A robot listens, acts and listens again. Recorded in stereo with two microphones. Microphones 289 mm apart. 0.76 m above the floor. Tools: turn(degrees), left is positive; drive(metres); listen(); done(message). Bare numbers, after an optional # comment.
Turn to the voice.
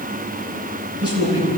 # The man speaking: about 50° right or 130° right.
turn(-50)
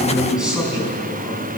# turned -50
done("Facing the man speaking.")